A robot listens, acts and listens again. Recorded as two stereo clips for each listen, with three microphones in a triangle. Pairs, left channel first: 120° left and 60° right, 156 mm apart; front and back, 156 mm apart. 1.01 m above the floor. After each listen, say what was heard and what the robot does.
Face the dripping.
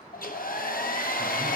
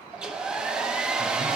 Keep listening.
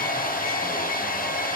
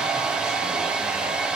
Keep listening.
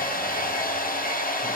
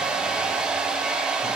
I can't make out dripping, only a hair dryer.